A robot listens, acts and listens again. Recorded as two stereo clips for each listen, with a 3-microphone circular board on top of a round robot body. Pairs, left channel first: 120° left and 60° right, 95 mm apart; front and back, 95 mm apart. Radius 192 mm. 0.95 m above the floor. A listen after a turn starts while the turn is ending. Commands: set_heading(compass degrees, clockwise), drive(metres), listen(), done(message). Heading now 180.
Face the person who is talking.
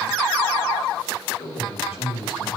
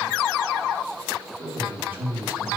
set_heading(75)
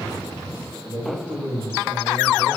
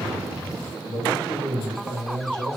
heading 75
set_heading(85)
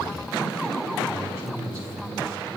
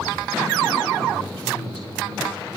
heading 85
done("Found it: a man speaking, straight ahead, over 4 m away.")